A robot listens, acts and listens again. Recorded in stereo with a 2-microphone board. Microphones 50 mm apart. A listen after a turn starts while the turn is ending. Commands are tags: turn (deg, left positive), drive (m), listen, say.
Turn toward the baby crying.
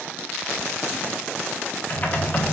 <listen/>
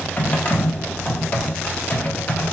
<listen/>
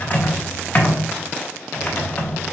<say>I can't make out a baby crying, only typing on a keyboard.</say>